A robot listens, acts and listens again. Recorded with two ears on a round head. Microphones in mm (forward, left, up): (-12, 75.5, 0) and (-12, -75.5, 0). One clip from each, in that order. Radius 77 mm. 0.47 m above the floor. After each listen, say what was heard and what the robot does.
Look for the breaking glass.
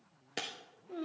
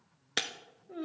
The breaking glass: about 50° right or 130° right. Turn 50° right.
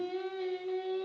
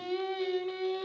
Keep listening.
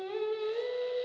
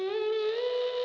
I heard breaking glass, but can't make it out now. It was about straight ahead or 80° right.